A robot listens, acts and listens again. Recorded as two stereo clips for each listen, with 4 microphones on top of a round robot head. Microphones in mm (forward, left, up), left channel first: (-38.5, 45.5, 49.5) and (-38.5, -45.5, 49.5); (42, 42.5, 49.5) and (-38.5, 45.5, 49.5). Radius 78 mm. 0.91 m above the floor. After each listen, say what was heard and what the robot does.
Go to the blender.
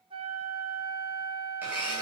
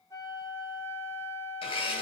The blender: 15° right. Turn 15° right.
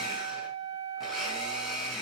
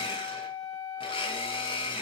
Drive 1.0 m forward.
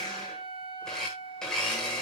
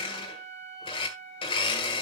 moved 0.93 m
Drive 1.0 m forward.
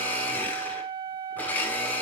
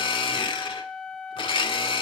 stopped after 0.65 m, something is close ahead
The blender is now 15° left. Turn 15° left.
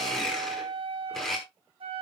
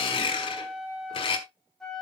Arrived at the blender, straight ahead.